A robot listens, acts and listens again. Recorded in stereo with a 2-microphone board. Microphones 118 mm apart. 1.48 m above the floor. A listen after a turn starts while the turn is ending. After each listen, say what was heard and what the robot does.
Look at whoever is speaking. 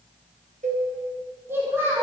The child speaking: about 20° right or 160° right. Turn 20° right.
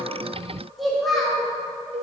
Facing the child speaking, 1 to 2 m away.